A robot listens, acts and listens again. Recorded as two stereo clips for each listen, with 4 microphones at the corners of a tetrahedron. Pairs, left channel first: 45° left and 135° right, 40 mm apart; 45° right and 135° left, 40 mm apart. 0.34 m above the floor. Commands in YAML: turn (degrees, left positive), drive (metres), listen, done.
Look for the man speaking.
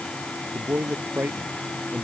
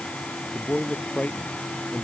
turn: -95
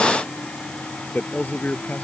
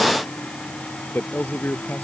done: "Found it: a man speaking, straight ahead."